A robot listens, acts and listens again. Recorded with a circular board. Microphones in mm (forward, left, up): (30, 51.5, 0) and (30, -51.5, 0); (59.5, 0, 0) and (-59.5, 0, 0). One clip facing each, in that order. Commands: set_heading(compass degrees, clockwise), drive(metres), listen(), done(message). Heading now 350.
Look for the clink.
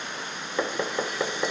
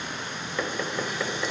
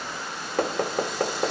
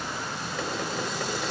listen()
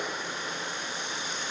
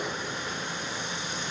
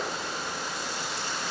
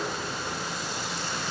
listen()
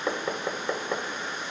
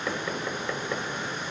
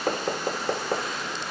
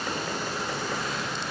done("I can't make out a clink, only knocking.")